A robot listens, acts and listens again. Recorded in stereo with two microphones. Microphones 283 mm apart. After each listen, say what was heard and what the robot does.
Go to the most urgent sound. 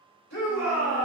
The shout: about 65° left or 115° left. Turn 65° left.
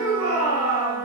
So it is at 35° left. Turn 35° left.
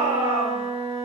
The shout is now 25° right. Turn 25° right.
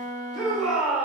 Drive 1.0 m forward.
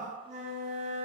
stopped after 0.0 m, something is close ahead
Keep listening.
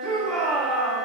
Something is in my way. I am facing the shout but have not reached it.